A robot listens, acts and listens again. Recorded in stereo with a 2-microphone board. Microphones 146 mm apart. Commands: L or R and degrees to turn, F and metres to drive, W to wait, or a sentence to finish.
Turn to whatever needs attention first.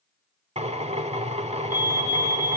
R75
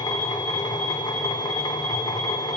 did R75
W
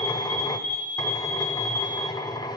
R25
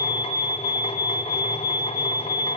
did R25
R10
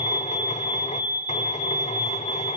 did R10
Found it: a fire alarm, straight ahead.